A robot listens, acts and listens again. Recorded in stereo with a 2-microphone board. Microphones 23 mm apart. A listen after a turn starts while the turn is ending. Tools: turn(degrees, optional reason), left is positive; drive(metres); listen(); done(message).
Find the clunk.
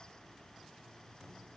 listen()
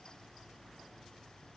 listen()
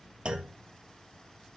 turn(degrees=-50, reason="The clunk: about 50° right or 130° right.")
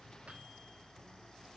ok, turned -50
listen()
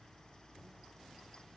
done("I heard a clunk, but can't make it out now. It was about straight ahead or 80° right.")